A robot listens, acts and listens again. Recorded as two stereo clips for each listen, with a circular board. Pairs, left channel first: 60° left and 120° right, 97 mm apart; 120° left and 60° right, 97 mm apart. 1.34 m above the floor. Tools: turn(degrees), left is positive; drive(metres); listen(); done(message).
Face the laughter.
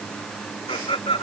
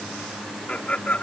turn(degrees=50)
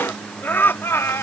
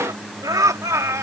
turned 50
done("Facing the laughter.")